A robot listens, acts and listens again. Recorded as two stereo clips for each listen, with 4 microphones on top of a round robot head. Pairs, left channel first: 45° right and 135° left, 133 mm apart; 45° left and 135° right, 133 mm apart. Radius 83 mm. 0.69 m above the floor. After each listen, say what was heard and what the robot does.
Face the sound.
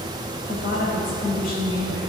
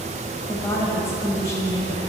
The woman speaking: 25° right. Turn 25° right.
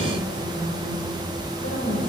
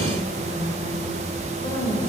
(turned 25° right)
The woman speaking is now 15° right. Turn 15° right.
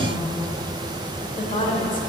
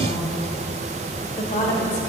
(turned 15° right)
Found it: a woman speaking, straight ahead, 2 to 4 m away.